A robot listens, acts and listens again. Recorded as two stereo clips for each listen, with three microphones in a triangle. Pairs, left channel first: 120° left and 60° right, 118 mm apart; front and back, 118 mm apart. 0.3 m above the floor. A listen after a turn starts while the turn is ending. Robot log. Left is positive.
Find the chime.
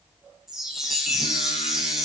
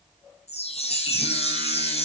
note: The chime: 25° left.
cmd yaw +25
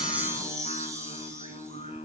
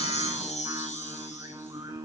end: Facing the chime, 1 to 2 m away.